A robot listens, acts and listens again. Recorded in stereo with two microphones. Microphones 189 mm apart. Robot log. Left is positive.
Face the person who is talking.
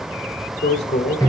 note: The man speaking: about 65° left or 115° left.
cmd yaw +65
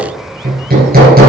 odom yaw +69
cmd idle
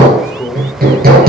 note: So it is at 15° left.
cmd yaw +15
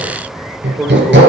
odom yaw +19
end: Found it: a man speaking, straight ahead, 1 to 2 m away.